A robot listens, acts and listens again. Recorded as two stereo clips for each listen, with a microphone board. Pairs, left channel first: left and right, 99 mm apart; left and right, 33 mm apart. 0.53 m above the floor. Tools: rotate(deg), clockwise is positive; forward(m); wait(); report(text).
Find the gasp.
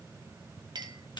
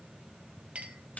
wait()
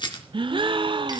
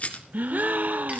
rotate(60)
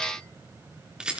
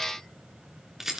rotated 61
wait()
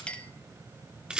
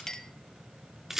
report("I heard a gasp, but can't make it out now. It was about straight ahead or 55° right.")